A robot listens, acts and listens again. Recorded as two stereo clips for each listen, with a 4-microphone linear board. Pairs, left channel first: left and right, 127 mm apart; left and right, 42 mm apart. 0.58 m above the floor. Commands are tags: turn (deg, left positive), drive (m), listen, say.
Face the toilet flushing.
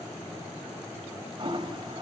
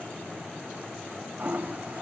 <turn deg="-40"/>
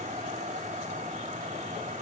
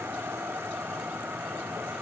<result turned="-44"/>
<turn deg="-95"/>
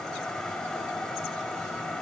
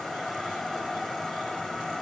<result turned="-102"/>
<say>Found it: a toilet flushing, straight ahead.</say>